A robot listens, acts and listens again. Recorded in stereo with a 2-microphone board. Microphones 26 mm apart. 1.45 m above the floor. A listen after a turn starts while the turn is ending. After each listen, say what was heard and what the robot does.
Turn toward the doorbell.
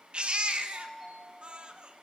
Turn 30° right.
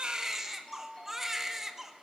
So it is at 15° left. Turn 15° left.
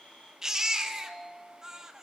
Facing the doorbell, over 4 m away.